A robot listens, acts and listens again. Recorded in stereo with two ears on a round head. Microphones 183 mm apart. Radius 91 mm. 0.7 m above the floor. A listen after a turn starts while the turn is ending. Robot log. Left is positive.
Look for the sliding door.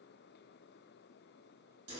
cmd idle
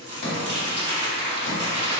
note: The sliding door: about 60° left or 120° left.
cmd yaw +60
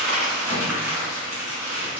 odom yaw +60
cmd idle
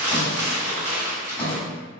end: Found it: a sliding door, straight ahead, under 1 m away.